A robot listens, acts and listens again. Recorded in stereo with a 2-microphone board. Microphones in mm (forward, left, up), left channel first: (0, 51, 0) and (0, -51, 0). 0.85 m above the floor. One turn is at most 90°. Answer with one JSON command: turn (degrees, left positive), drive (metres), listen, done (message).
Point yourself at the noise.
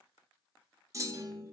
{"turn": -35}
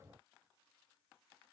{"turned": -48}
{"listen": true}
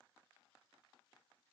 {"done": "I heard a clunk, but can't make it out now. It was about 15° left or 100° right."}